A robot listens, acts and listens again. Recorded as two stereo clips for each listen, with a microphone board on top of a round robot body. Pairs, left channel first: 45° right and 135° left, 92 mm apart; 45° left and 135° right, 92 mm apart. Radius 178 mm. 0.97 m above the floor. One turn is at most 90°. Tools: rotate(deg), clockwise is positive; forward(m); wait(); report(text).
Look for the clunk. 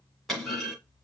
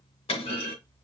rotate(-45)
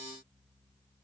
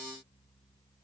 report("I heard a clunk from this way, but can't make it out now.")